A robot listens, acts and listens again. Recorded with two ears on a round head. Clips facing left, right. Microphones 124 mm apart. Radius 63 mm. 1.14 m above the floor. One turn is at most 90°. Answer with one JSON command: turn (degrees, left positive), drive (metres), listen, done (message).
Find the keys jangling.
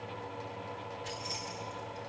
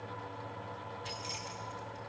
{"turn": -40}
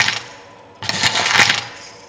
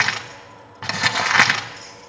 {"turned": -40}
{"done": "Facing the keys jangling, over 4 m away."}